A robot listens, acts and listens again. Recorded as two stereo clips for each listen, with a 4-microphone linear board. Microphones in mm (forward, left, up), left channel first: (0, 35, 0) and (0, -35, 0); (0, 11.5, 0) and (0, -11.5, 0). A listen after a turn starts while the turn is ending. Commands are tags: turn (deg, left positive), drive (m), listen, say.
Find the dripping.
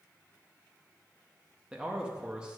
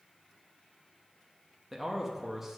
<listen/>
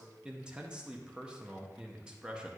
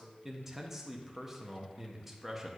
<listen/>
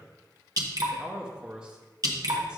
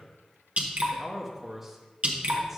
<turn deg="-55"/>
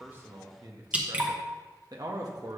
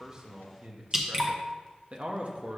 <turn deg="-20"/>
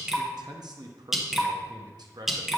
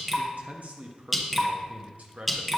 <say>Found it: dripping, straight ahead, under 1 m away.</say>